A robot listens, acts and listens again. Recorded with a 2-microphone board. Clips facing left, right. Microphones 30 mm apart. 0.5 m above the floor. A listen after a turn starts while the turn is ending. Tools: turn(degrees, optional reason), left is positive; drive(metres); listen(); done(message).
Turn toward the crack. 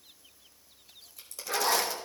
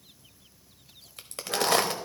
turn(degrees=-65, reason="The crack: about 65° right or 115° right.")
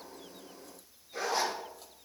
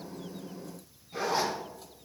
listen()
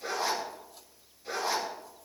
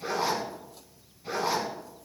done("I heard a crack, but can't make it out now. It was about straight ahead or 50° right.")